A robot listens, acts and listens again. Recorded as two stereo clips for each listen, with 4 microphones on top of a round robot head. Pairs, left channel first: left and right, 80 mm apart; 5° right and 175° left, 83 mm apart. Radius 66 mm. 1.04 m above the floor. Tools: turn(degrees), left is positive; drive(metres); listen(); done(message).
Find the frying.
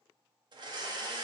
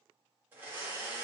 listen()
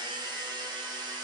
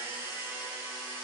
listen()
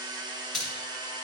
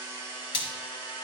done("Found it: frying, straight ahead.")